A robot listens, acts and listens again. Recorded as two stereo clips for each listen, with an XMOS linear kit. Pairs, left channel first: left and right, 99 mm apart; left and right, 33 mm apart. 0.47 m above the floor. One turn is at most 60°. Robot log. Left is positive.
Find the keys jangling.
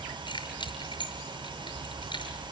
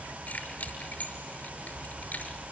note: The keys jangling: about 55° left or 125° left.
cmd yaw +55
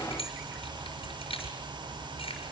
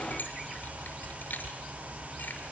note: So it is at 70° left.
cmd yaw +60
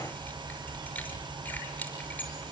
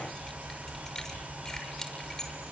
note: The keys jangling is now 15° left.
cmd yaw +15
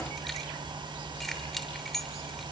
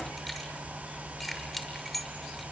end: Facing the keys jangling.